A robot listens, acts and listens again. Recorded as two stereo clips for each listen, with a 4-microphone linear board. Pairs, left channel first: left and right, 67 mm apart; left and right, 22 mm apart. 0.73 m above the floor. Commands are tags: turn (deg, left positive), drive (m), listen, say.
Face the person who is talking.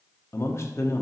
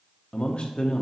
<turn deg="45"/>
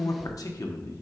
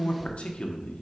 <turn deg="85"/>
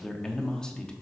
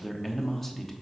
<turn deg="15"/>
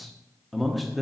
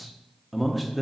<say>Found it: a man speaking, straight ahead, 1 to 2 m away.</say>